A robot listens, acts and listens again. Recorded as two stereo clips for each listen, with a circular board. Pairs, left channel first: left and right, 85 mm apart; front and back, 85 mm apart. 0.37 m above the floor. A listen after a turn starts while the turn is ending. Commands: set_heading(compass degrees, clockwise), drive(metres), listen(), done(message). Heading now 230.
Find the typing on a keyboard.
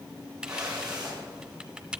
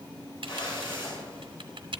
set_heading(40)
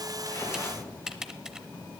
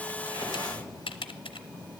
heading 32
done("Found it: typing on a keyboard, straight ahead, under 1 m away.")